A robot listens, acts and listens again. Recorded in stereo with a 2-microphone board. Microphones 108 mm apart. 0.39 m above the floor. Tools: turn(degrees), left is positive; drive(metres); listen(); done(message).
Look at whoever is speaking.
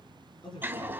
turn(degrees=50)
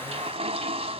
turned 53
listen()
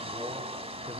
listen()
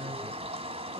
done("Facing the man speaking, over 4 m away.")